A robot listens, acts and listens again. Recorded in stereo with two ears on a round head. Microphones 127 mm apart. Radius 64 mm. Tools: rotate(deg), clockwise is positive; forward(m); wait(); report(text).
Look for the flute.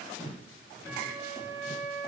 rotate(30)
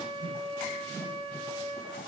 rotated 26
rotate(140)
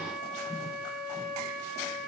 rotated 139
report("Facing the flute, over 4 m away.")